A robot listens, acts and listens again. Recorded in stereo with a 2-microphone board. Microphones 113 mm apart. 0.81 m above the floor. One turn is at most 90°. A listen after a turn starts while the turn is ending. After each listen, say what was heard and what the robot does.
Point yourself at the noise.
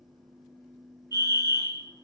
The fire alarm: about 35° right or 145° right. Turn 35° right.
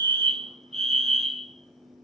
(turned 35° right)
So it is at 100° right. Turn 90° right.
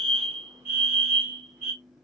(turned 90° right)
The fire alarm is now 30° right. Turn 30° right.
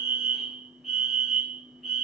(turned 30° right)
Found it: a fire alarm, straight ahead.